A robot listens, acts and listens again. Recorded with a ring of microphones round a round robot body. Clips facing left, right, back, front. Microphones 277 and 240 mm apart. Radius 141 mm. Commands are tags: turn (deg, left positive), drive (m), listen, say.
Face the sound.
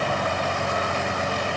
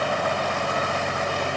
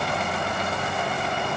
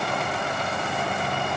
<listen/>
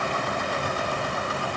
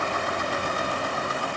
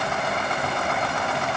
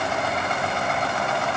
<listen/>
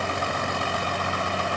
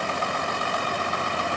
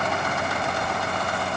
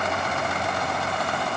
<say>I can't make out anything to turn to.</say>